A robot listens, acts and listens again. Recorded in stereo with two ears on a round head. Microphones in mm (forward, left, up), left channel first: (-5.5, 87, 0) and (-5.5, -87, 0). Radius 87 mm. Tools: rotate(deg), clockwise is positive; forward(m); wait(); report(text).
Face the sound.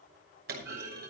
rotate(50)
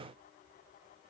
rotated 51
wait()
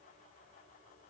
report("I heard a clunk, but can't make it out now. It was about straight ahead or 75° right.")